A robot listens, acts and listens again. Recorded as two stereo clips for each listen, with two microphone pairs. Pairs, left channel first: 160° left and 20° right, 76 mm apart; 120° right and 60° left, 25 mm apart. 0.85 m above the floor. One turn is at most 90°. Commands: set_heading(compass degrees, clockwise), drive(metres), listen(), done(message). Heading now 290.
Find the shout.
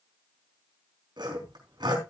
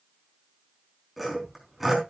listen()
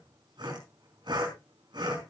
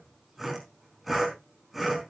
listen()
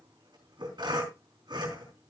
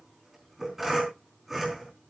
done("I can't make out a shout, only sawing.")